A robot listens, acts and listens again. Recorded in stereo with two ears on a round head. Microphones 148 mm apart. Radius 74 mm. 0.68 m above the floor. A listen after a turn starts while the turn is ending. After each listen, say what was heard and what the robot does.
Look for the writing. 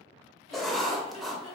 Turn 30° left.
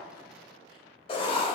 So it is at 145° left. Turn 145° left.
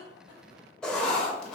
Facing the writing, under 1 m away.